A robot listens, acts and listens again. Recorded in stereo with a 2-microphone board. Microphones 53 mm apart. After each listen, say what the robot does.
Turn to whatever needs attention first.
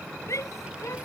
Turn 90° left.
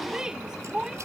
Turn 15° right.
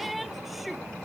Facing the shout.